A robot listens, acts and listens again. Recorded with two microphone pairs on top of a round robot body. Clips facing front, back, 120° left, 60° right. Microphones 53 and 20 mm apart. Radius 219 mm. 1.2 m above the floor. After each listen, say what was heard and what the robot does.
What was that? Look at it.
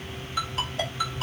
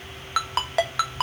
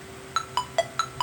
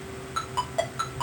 The ringtone: 175° left. Turn 175° left.
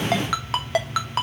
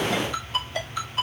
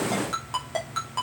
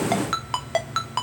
Found it: a ringtone, straight ahead, 1 to 2 m away.